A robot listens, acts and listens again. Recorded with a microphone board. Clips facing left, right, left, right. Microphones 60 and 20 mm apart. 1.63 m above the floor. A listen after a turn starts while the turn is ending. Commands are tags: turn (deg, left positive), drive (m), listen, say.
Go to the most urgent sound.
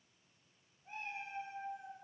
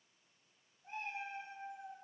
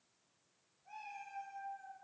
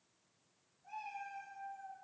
<listen/>
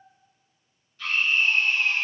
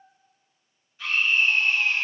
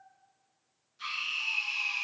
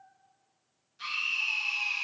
<turn deg="-30"/>
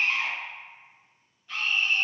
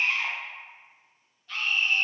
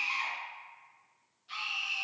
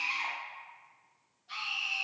<turn deg="15"/>
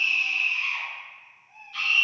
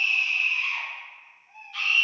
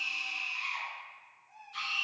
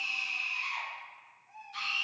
<drive m="1.0"/>
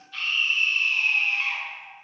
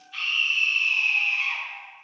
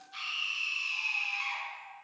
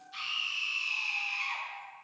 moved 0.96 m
<drive m="1.0"/>
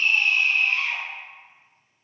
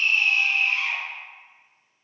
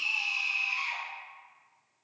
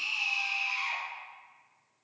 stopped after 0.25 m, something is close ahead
<say>Arrived at the scream, straight ahead.</say>